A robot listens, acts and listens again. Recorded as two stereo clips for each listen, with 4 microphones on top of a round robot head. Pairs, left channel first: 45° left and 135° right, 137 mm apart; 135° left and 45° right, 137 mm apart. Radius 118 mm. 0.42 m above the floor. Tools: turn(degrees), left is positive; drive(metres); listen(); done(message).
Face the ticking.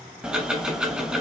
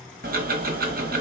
turn(degrees=-50)
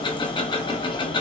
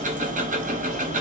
turn(degrees=-15)
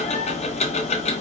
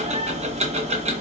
done("Facing the ticking.")